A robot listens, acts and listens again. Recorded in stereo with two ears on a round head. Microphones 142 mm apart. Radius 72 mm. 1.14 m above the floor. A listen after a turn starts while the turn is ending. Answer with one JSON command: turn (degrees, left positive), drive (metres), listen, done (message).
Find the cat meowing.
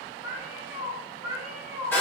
{"turn": -30}
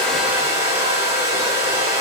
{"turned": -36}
{"listen": true}
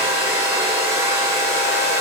{"listen": true}
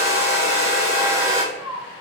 {"turn": -155}
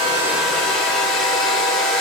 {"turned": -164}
{"listen": true}
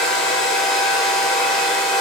{"listen": true}
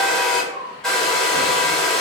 {"done": "Found it: a cat meowing, straight ahead, over 4 m away."}